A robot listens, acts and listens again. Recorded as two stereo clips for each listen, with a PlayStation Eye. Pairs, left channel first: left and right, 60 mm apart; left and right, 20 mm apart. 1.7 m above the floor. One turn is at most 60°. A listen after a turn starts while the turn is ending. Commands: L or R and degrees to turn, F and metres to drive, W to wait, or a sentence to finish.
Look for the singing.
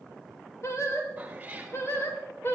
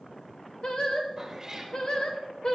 L40
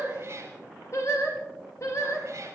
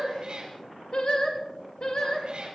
L60
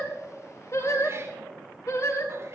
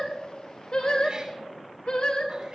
L60
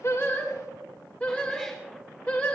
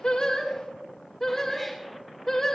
L15
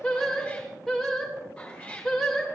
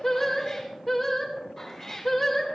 Facing the singing.